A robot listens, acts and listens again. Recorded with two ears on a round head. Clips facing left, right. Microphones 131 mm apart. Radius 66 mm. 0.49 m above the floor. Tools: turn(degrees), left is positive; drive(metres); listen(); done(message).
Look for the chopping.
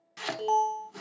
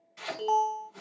turn(degrees=65)
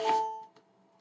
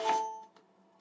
listen()
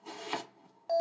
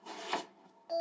done("Facing the chopping, 1 to 2 m away.")